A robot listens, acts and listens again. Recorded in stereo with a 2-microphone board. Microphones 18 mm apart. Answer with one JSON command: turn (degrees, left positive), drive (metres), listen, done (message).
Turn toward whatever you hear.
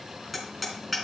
{"turn": 30}
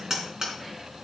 {"turn": -30}
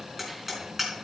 {"turn": -10}
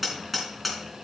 {"done": "Facing the hammering, 2 to 4 m away."}